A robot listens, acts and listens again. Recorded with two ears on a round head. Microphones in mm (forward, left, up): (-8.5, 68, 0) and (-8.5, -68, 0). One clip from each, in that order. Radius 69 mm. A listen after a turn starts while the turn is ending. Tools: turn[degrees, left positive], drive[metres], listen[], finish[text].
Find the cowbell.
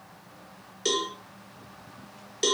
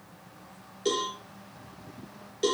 Thought: The cowbell: about 55° left or 125° left.
Action: turn[55]
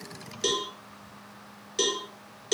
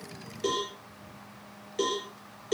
Thought: So it is at 75° left.
Action: turn[75]
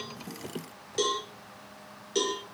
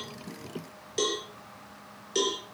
Action: finish[Facing the cowbell.]